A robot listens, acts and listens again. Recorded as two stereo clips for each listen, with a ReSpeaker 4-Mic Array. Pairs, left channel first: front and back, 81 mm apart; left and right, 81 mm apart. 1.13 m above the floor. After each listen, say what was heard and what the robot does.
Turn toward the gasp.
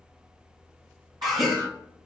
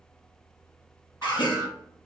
The gasp: 90° left. Turn 90° left.
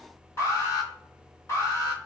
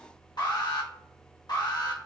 Facing where the gasp came from. I can't hear it now.